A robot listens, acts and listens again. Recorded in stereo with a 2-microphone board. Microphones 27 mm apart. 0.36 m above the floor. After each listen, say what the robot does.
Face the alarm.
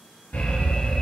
Turn 60° left.
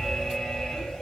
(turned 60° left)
Turn 25° left.
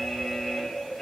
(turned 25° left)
Found it: an alarm, straight ahead.